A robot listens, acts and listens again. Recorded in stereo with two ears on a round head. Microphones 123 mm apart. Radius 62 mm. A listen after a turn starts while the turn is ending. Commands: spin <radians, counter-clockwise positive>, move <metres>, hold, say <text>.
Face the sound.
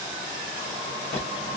spin 0.96
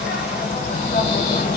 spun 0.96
spin 1.05
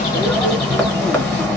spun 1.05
spin 0.17
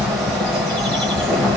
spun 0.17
say Facing the bird.